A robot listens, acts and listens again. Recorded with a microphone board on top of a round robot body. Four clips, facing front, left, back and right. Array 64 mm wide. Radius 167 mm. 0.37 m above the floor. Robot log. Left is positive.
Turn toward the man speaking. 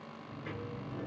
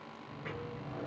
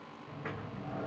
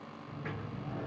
cmd idle
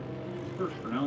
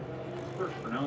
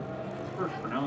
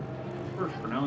note: The man speaking: 135° right.
cmd yaw -135
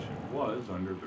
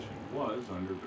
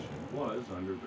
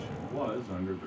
end: Facing the man speaking, 1 to 2 m away.